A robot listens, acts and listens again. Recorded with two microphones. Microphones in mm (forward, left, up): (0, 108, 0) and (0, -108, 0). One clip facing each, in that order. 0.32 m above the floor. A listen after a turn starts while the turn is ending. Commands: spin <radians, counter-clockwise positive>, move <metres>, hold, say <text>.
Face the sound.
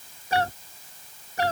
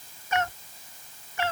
spin 0.70
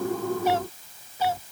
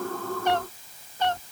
say Facing the cat meowing.